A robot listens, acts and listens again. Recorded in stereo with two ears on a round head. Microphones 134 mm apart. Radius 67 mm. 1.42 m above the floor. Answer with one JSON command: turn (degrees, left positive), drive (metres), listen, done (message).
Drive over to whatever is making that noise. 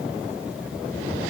{"listen": true}
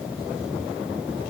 {"listen": true}
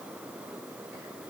{"done": "I can't make out anything."}